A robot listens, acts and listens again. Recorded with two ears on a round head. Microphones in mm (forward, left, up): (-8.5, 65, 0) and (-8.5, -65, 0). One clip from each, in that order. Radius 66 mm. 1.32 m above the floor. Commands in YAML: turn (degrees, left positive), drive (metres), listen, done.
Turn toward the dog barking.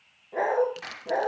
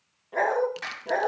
turn: -40
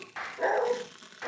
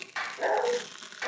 done: "Found it: a dog barking, straight ahead, over 4 m away."